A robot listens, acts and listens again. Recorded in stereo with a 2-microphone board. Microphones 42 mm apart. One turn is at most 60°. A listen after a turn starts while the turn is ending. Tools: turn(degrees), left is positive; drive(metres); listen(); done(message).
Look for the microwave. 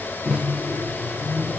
turn(degrees=15)
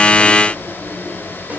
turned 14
listen()
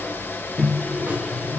done("Facing the microwave, 1 to 2 m away.")